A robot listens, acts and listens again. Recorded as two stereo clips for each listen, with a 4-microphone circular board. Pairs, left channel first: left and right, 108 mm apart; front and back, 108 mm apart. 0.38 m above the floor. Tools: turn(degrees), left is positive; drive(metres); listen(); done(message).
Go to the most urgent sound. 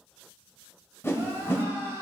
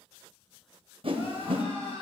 turn(degrees=-25)
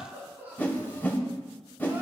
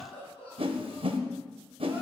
turn(degrees=-20)
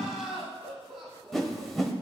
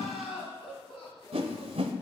drive(metres=1.0)
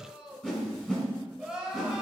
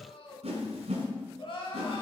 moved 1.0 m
turn(degrees=-10)
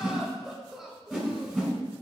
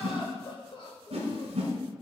drive(metres=1.0)
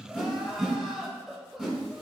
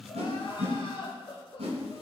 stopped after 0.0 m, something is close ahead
done("Arrived at the crying, straight ahead.")